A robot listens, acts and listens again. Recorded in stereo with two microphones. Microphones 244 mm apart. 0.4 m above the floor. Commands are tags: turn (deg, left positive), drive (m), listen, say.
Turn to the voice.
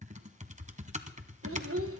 <turn deg="-65"/>
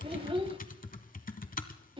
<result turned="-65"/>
<turn deg="-25"/>
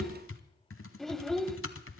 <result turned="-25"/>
<say>Found it: a child speaking, straight ahead.</say>